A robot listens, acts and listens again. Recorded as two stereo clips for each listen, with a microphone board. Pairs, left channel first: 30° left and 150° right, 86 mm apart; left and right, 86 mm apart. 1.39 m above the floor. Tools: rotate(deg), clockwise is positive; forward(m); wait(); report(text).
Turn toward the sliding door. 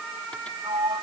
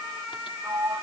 rotate(145)
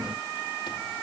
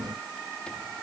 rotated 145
wait()
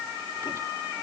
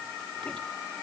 wait()
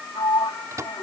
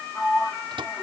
rotate(-10)
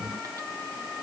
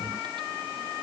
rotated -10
wait()
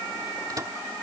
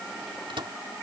wait()
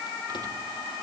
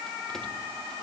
report("Facing where the sliding door came from. I can't hear it now.")